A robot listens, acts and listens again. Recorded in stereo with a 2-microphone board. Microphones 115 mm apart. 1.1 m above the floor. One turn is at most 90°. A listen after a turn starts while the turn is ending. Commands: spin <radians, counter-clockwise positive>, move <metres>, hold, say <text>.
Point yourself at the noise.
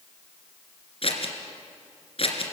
spin 0.96
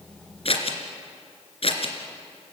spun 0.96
spin 1.05
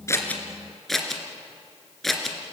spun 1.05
say Found it: scissors, straight ahead, 2 to 4 m away.